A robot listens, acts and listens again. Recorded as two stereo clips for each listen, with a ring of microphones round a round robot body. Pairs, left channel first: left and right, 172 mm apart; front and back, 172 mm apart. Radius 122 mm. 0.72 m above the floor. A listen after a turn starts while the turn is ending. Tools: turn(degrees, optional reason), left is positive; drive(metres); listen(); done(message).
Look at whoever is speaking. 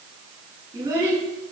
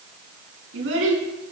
turn(degrees=-165, reason="The child speaking: 165° right.")
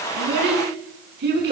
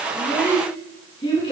turn(degrees=-70, reason="The child speaking is now 70° right.")
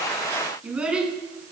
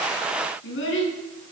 done("Facing the child speaking.")